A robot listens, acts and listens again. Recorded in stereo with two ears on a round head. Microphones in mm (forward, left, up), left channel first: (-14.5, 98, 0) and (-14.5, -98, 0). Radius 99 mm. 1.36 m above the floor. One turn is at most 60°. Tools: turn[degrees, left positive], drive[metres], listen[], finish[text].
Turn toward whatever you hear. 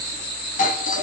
Thought: The doorbell: about 35° left or 145° left.
Action: turn[35]
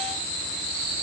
Action: listen[]
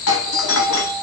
Thought: So it is at 105° left.
Action: turn[60]
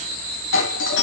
Thought: The doorbell is now 55° left.
Action: turn[55]
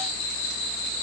Action: listen[]
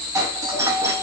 Thought: The doorbell is now 15° right.
Action: turn[-15]
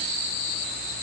Action: listen[]
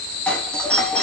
Action: finish[Found it: a doorbell, straight ahead, 2 to 4 m away.]